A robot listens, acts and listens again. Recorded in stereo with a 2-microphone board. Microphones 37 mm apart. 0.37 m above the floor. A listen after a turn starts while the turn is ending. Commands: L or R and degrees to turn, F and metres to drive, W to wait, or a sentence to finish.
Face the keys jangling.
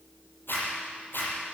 W
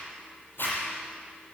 W
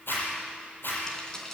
L30
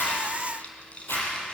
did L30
L150
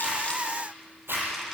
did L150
W
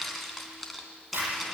Found it: keys jangling, straight ahead, 2 to 4 m away.